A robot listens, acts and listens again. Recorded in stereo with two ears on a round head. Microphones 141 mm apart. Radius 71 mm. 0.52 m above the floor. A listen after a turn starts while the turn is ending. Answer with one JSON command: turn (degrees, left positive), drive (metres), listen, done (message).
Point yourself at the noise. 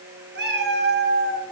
{"turn": -90}
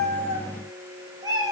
{"turn": -25}
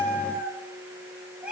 {"done": "Facing the cat meowing."}